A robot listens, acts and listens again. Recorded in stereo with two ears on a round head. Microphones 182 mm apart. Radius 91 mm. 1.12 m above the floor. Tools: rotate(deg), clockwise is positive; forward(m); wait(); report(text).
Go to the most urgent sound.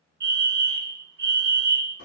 rotate(50)
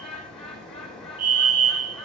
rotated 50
rotate(60)
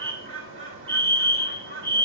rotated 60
forward(1.0)
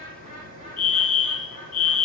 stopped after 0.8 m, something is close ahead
report("Arrived at the fire alarm, straight ahead.")